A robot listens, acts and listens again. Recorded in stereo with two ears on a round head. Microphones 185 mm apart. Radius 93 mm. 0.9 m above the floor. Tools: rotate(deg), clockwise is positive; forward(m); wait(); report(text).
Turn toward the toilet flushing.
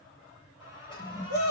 rotate(-25)
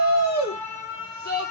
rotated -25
wait()
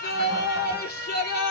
wait()
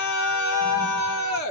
report("I heard a toilet flushing, but can't make it out now. It was about straight ahead or 130° left.")